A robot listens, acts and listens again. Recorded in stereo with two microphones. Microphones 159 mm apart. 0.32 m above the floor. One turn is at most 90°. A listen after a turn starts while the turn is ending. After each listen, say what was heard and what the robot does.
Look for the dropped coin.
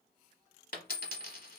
The dropped coin: about 60° left or 120° left. Turn 60° left.
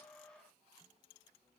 Keep listening.
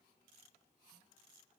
I heard a dropped coin, but can't make it out now. It was about straight ahead or 60° left.